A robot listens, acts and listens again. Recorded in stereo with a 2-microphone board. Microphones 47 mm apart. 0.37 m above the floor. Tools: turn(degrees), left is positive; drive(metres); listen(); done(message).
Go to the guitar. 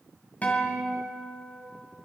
turn(degrees=35)
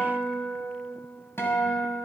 turn(degrees=105)
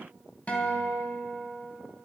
turn(degrees=35)
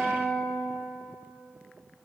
drive(metres=1.0)
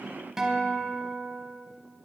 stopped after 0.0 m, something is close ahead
turn(degrees=-10)
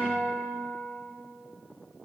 done("Blocked. The guitar is further on, straight ahead.")